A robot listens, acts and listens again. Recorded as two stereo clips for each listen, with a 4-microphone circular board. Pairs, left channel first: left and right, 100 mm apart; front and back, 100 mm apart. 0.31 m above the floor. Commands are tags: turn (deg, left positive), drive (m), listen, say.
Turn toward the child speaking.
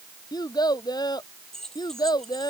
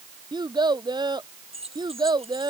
<turn deg="135"/>
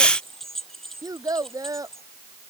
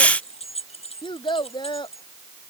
<turn deg="-35"/>
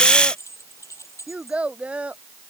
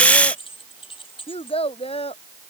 <turn deg="-10"/>
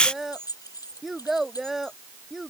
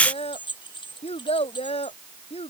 <say>Facing the child speaking.</say>